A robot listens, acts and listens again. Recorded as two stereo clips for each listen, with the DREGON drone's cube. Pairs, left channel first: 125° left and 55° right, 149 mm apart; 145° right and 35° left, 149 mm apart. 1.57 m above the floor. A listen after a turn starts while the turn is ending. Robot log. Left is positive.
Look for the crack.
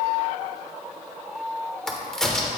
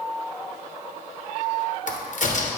note: The crack: 150° right.
cmd yaw -150
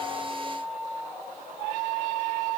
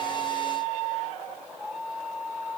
end: I heard a crack from this way, but can't make it out now.